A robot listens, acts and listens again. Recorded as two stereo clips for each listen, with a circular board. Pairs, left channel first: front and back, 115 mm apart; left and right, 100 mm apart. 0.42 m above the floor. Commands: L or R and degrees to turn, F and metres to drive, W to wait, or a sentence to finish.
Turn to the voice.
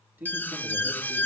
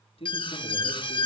L105
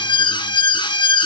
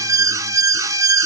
W
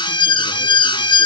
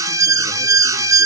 W
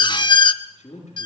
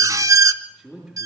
Facing the man speaking, over 4 m away.